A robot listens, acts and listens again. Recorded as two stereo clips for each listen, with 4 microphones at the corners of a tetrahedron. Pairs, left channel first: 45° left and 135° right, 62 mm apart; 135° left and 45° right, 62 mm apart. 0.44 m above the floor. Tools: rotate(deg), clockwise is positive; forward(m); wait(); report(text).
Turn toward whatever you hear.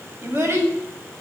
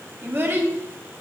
rotate(100)
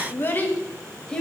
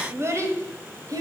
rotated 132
rotate(35)
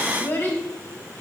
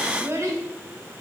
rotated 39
rotate(20)
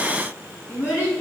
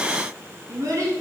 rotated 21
rotate(10)
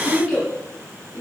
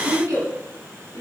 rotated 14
report("Facing the child speaking.")